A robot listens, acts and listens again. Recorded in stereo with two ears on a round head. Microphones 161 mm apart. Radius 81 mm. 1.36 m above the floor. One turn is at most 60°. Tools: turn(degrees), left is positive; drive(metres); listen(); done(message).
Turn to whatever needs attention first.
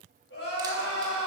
turn(degrees=60)
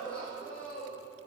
done("Facing the crying, 2 to 4 m away.")